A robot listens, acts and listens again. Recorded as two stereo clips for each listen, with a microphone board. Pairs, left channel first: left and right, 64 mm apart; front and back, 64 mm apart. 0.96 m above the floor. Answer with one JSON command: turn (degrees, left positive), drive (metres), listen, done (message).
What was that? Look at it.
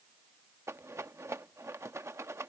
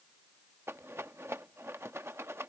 {"turn": -130}
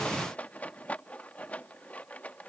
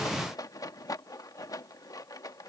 {"turn": 25}
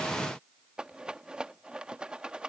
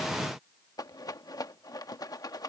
{"turn": -15}
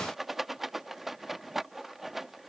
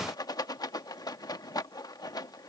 {"done": "Facing the rattle."}